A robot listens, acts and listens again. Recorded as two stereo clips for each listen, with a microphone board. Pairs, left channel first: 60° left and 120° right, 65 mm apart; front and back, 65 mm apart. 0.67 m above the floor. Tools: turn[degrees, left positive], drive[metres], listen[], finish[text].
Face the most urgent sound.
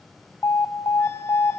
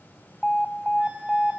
Thought: The alarm: 85° left.
Action: turn[85]
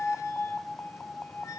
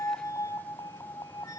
Thought: The alarm is now 10° right.
Action: turn[-10]
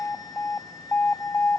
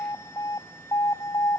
Action: finish[Found it: an alarm, straight ahead, 1 to 2 m away.]